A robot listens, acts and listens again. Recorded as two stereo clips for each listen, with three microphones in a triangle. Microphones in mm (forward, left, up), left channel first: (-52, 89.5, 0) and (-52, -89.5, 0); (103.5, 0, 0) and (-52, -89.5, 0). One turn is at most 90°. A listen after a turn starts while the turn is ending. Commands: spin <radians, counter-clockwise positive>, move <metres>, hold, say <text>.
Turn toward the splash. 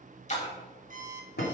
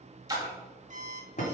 spin 1.57
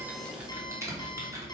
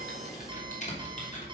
spin 0.87
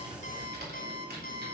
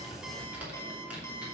say Facing where the splash came from. I can't hear it now.